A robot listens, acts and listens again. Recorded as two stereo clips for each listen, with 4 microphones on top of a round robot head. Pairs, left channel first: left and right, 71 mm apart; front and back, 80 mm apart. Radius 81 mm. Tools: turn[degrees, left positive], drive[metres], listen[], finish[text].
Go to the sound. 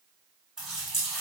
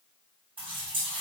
Thought: The running tap: 175° right.
Action: turn[-175]
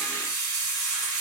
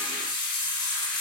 Thought: The running tap is now 10° left.
Action: turn[10]
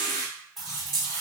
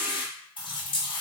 Action: drive[1.0]
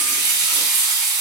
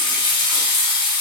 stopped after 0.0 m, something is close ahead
Action: finish[Something is in my way. I am facing the running tap but have not reached it.]